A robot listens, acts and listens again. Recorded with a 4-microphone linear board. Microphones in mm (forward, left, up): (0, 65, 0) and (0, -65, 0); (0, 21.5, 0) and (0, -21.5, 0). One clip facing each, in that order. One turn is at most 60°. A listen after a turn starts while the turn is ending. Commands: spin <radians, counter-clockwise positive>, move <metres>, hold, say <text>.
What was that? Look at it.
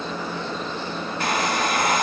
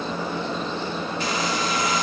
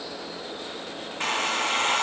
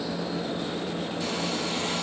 spin 0.96
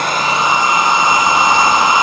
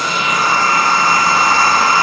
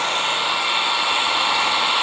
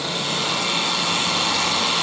spin 0.35
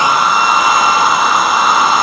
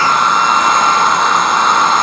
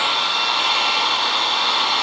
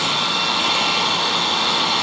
say Found it: a hair dryer, straight ahead, under 1 m away.